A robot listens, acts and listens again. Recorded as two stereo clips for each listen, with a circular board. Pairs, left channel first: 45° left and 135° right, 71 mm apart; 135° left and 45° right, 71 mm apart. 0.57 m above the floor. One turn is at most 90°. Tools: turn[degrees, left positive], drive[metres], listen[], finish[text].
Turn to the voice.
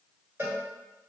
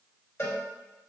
Action: listen[]
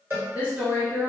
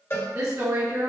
Thought: The woman speaking: 70° right.
Action: turn[-70]
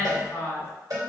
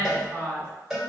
Thought: The woman speaking is now 15° right.
Action: turn[-15]
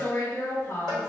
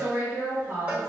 Action: finish[Facing the woman speaking, 1 to 2 m away.]